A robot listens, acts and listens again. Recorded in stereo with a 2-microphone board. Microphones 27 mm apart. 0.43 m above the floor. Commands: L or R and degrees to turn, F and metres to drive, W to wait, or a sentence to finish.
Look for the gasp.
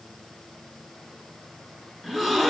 L30
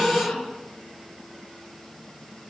L145
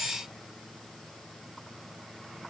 I heard a gasp from this way, but can't make it out now.